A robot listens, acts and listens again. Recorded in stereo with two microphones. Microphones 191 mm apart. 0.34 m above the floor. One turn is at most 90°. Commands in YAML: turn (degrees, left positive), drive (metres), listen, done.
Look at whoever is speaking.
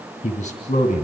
turn: 40
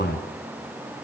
turn: 90
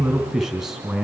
done: "Found it: a man speaking, straight ahead."